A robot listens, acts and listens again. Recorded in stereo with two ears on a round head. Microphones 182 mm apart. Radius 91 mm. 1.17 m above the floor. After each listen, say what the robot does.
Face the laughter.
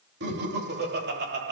Turn 55° right.
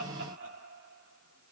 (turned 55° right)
Turn 65° right.
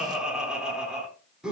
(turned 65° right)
Facing the laughter, over 4 m away.